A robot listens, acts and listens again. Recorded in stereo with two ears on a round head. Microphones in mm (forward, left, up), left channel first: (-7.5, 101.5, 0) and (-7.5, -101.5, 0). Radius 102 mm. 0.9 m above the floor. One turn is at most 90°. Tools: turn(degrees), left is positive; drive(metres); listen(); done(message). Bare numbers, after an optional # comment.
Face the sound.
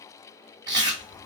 # The chewing: about 20° right or 160° right.
turn(-20)
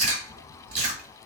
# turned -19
# So it is at 145° right.
turn(-90)
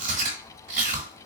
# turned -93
# The chewing is now 45° right.
turn(-45)
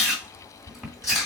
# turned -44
done("Facing the chewing.")